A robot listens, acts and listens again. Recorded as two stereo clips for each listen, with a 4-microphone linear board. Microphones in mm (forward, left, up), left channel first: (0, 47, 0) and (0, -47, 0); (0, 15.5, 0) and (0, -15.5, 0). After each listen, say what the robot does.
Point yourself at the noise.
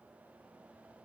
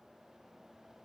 Keep listening.
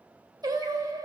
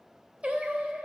Turn 35° right.
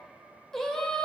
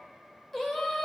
Turn 10° left.
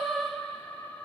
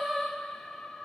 Turn 15° left.
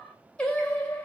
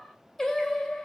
Turn 15° left.
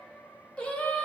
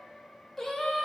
Turn 10° left.
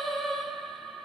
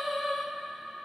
Found it: singing, straight ahead.